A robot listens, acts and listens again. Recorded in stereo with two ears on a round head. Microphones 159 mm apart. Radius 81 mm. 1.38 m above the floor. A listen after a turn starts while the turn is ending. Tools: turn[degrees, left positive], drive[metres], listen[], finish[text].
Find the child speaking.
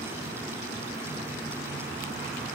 Action: listen[]
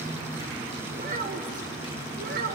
Thought: The child speaking: about 55° right or 125° right.
Action: turn[-55]
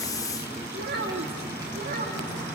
Thought: So it is at 50° right.
Action: turn[-50]
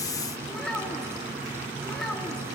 Action: finish[Found it: a child speaking, straight ahead, 2 to 4 m away.]